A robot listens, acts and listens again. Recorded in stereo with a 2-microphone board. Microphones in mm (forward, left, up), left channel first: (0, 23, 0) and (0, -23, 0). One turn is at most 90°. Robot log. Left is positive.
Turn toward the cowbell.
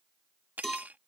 cmd yaw +30
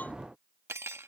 cmd idle
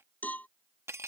note: So it is at 145° left.
cmd yaw +90
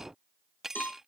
note: The cowbell is now 45° left.
cmd yaw +45
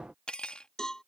note: The cowbell is now 15° left.
cmd yaw +15
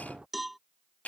end: Found it: a cowbell, straight ahead.